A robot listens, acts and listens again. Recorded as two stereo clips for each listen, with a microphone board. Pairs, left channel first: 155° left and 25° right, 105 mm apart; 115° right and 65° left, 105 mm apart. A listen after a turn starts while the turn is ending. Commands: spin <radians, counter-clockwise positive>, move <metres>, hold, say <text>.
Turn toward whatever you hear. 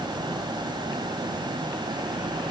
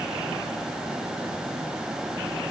hold
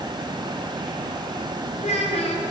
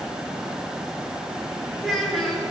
spin 2.79
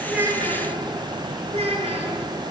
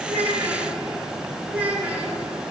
spin -0.17
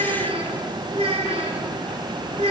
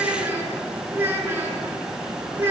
say Facing the child speaking, over 4 m away.